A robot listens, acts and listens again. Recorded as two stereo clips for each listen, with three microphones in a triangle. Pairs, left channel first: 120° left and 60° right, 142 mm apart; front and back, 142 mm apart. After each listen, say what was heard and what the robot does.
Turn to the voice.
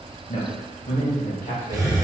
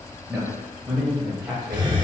The man speaking: 105° left. Turn 105° left.
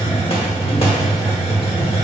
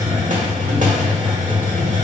Keep listening.
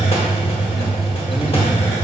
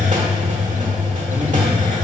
Keep listening.
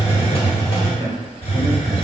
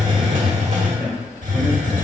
The man speaking is now 25° left. Turn 25° left.
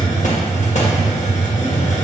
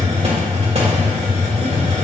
Keep listening.
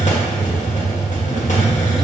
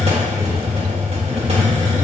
Keep listening.
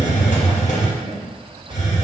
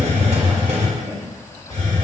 Facing the man speaking, 2 to 4 m away.